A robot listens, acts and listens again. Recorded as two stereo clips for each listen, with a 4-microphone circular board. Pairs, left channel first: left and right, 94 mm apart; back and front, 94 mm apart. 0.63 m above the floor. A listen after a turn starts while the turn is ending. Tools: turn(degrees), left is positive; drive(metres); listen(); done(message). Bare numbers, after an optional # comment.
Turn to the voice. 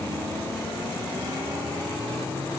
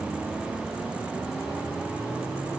listen()
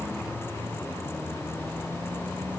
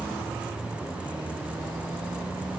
listen()
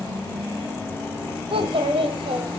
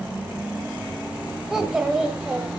# The child speaking: 80° right.
turn(-80)
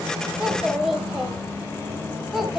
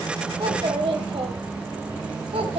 done("Facing the child speaking.")